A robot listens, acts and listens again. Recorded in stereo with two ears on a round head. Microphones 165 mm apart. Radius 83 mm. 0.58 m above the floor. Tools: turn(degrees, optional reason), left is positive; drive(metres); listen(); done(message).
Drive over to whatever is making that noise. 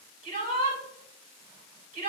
turn(degrees=-50, reason="The shout: about 50° right or 130° right.")
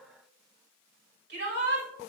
turn(degrees=-75, reason="So it is at 75° right.")
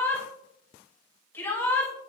turn(degrees=15, reason="The shout is now 15° left.")
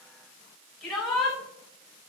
drive(metres=1.0)
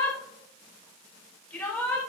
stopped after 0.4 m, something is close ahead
turn(degrees=10, reason="The shout is now 10° left.")
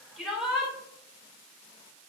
done("Blocked. The shout is further on, straight ahead.")